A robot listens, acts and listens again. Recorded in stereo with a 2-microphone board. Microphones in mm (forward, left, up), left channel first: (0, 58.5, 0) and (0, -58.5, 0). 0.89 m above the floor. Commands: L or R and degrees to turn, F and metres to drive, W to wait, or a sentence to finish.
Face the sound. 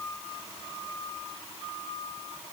W
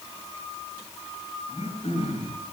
L65
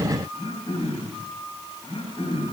L55
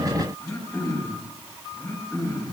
L25
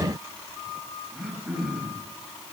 Facing the throat clearing, over 4 m away.